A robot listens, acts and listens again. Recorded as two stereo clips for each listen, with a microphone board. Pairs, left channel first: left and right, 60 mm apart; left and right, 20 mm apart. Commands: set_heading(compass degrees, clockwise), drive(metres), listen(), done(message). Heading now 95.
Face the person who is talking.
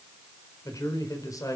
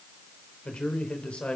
set_heading(25)
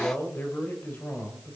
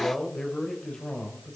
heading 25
set_heading(350)
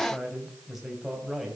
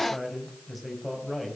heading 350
done("Found it: a man speaking, straight ahead, over 4 m away.")